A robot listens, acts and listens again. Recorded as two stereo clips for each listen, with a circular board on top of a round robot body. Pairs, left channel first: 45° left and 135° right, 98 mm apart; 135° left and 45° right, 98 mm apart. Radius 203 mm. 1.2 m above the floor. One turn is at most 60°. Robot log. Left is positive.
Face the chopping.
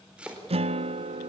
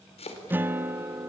note: The chopping: 145° left.
cmd yaw +60
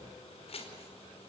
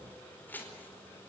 note: The chopping is now 65° left.
cmd yaw +60
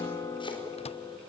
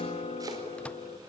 cmd idle
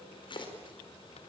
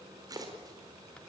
note: The chopping is now 10° left.
cmd yaw +10
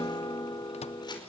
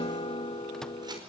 cmd idle
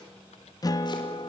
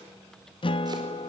cmd idle
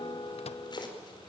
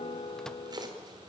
end: Facing the chopping.